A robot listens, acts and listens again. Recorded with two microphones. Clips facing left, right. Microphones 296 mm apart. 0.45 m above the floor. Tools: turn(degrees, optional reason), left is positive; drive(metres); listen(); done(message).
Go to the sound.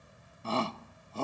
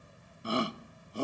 turn(degrees=-15, reason="The shout: about 15° right or 165° right.")
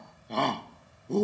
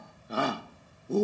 drive(metres=1.0)
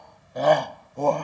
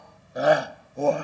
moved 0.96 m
turn(degrees=-10, reason="The shout is now 10° right.")
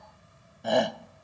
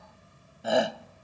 drive(metres=1.0)
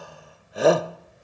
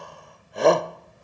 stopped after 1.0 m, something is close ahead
done("Arrived at the shout, straight ahead.")